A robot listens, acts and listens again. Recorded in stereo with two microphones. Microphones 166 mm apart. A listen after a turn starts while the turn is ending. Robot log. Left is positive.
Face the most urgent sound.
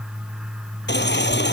cmd yaw +90
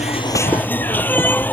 note: So it is at 10° left.
cmd yaw +10
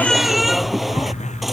end: Found it: a baby crying, straight ahead.